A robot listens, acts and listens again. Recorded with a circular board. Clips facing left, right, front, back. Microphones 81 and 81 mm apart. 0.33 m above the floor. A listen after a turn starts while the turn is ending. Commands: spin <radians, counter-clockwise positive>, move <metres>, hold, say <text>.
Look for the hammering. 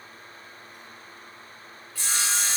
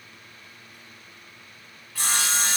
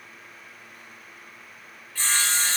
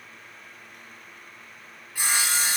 hold
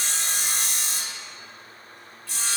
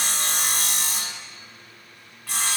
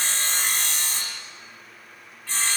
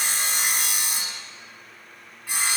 hold
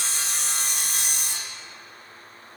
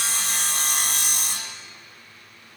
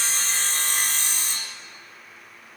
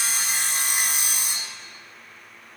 say I can't make out hammering, only sawing.